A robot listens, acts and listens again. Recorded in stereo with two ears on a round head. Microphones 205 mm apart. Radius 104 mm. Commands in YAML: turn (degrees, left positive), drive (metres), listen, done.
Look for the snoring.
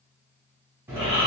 turn: -30
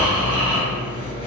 turn: 15
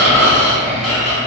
done: "Found it: snoring, straight ahead."